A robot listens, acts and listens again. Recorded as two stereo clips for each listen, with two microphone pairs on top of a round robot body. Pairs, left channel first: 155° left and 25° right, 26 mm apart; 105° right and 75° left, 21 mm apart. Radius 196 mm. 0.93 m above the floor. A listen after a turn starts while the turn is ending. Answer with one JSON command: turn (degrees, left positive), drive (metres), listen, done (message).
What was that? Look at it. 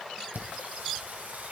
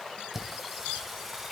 {"turn": -10}
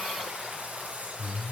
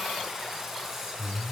{"done": "Found it: singing, straight ahead, over 4 m away."}